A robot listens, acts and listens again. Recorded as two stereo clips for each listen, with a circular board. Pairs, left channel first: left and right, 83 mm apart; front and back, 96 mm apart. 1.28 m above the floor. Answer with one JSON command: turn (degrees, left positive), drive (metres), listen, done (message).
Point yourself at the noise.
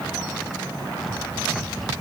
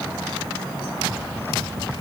{"listen": true}
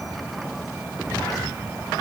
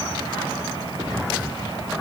{"listen": true}
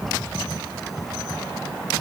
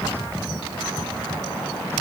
{"done": "I can't make out anything to turn to."}